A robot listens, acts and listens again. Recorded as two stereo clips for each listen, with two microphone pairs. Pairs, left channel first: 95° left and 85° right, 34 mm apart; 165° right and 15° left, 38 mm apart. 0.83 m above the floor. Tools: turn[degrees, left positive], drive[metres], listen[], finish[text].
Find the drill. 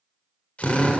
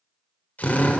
Thought: The drill: 150° left.
Action: turn[150]
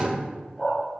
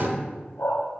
Thought: The drill is now 20° right.
Action: turn[-20]
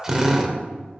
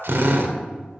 Action: finish[Found it: a drill, straight ahead, 1 to 2 m away.]